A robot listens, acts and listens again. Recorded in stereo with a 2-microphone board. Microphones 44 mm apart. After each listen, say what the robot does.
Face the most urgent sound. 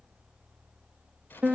Keep listening.
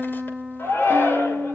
Turn 60° left.
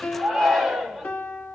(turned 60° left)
Found it: a shout, straight ahead.